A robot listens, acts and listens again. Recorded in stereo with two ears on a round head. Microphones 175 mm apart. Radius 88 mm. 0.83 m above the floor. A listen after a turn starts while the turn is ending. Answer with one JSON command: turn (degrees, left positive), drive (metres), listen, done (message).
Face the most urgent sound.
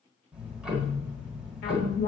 {"turn": 60}
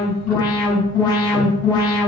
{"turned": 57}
{"turn": 25}
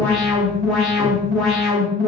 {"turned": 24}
{"done": "Facing the alarm, 2 to 4 m away."}